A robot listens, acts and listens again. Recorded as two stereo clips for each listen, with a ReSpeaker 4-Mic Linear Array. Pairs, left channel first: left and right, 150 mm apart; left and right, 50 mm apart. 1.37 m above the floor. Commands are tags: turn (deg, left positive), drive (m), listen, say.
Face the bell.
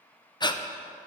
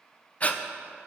<listen/>
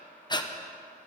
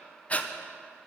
<listen/>
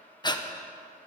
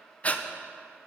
<say>I can't make out a bell, only breathing.</say>